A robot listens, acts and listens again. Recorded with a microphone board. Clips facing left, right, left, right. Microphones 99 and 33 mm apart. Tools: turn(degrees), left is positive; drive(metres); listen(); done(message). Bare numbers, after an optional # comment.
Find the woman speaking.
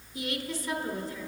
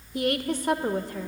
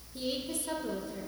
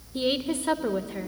# The woman speaking: about 55° right or 125° right.
turn(-55)
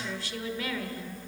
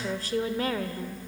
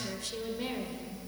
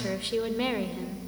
# So it is at 50° right.
turn(-50)
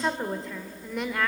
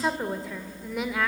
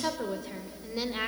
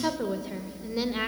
done("Found it: a woman speaking, straight ahead.")